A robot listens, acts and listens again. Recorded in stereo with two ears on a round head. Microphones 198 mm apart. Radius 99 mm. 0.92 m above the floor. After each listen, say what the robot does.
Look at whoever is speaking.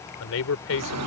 Turn 70° left.
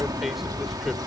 Keep listening.
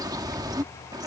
Keep listening.
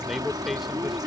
I heard a man speaking, but can't make it out now. It was about straight ahead or 40° left.